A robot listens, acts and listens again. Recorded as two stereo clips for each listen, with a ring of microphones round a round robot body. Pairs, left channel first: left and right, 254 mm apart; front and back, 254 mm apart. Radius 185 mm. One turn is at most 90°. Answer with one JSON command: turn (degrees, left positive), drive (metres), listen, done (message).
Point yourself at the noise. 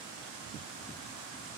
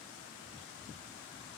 {"listen": true}
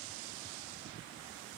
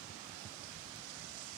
{"listen": true}
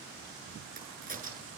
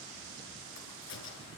{"turn": -35}
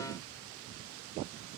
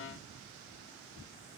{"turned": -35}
{"done": "Facing where the crack came from. I can't hear it now."}